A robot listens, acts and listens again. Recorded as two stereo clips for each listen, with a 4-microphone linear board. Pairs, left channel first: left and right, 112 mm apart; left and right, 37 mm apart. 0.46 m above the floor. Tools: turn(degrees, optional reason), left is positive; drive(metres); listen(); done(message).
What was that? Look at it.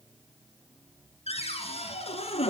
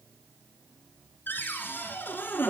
turn(degrees=65, reason="The cupboard door: about 65° left or 115° left.")
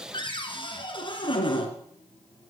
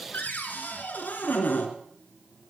turn(degrees=45, reason="So it is at 45° left.")
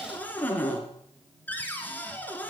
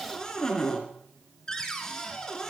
turn(degrees=15, reason="The cupboard door is now 15° left.")
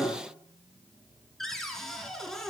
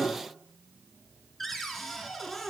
done("Facing the cupboard door.")